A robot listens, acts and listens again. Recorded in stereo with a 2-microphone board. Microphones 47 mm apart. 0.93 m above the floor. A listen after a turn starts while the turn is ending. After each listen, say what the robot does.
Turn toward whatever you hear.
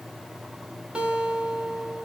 Turn 25° right.
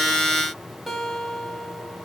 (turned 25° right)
Facing the guitar.